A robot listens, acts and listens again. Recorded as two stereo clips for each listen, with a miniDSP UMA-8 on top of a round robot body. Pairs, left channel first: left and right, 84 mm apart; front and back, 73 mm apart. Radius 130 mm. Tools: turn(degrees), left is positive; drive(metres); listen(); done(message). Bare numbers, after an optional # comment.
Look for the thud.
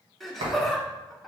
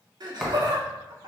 # The thud: 90° right.
turn(-90)
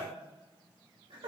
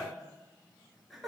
done("Facing where the thud came from. I can't hear it now.")